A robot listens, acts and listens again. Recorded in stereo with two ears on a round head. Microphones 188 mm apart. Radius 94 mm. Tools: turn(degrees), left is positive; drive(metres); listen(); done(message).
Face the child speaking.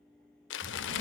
turn(degrees=-65)
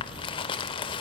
turn(degrees=-55)
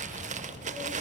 turn(degrees=20)
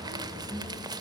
done("Found it: a child speaking, straight ahead, 2 to 4 m away.")